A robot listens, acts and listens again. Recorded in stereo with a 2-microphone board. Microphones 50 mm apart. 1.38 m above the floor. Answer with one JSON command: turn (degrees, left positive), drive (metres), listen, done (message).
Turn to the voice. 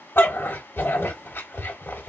{"listen": true}
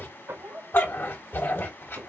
{"turn": -40}
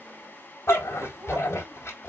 {"listen": true}
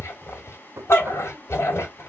{"listen": true}
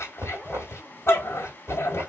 {"done": "I heard a child speaking, but can't make it out now. It was about straight ahead or 100° right."}